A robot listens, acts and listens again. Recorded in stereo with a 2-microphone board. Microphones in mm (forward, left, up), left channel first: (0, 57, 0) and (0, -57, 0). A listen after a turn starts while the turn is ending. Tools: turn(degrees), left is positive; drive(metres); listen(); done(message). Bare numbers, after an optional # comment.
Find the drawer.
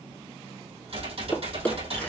turn(30)
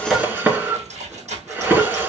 # So it is at 15° right.
turn(-15)
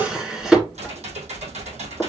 done("Facing the drawer, 1 to 2 m away.")